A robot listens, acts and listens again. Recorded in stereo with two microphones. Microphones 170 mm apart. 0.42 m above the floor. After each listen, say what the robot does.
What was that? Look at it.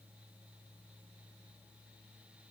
Keep listening.
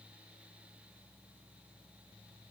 Keep listening.
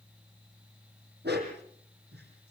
Turn 90° right.
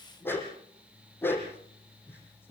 Turn 10° left.
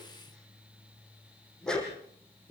Facing the dog barking.